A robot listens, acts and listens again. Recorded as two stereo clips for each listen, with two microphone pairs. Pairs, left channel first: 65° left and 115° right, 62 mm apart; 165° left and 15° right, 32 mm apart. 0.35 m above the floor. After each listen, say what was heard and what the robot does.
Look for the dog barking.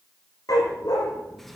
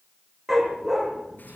The dog barking: 60° left. Turn 60° left.
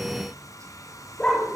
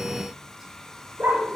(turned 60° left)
The dog barking is now 15° right. Turn 15° right.
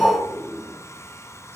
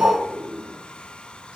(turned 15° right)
Facing the dog barking, over 4 m away.